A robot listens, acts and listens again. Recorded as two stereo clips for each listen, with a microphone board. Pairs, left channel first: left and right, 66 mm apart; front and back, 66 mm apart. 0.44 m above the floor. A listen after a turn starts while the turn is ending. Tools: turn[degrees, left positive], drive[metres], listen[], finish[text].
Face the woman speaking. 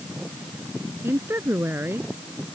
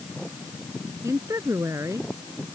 Thought: The woman speaking: 140° right.
Action: turn[-140]
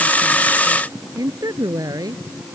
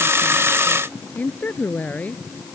Thought: The woman speaking is now 65° right.
Action: turn[-65]
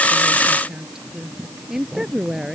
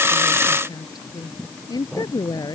Action: finish[Facing the woman speaking.]